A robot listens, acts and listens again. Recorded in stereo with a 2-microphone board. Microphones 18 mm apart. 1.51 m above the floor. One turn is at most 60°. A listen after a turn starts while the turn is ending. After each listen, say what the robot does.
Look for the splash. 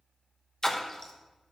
Turn 30° left.
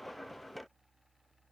Keep listening.
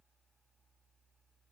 I heard a splash, but can't make it out now. It was about straight ahead or 120° left.